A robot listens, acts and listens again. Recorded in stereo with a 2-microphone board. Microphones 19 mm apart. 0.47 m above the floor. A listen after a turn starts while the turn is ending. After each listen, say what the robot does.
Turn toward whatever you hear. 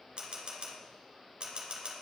Turn 50° right.
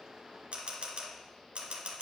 Turn 80° right.
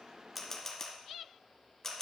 Turn 20° left.
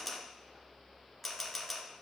Found it: a camera shutter, straight ahead, 1 to 2 m away.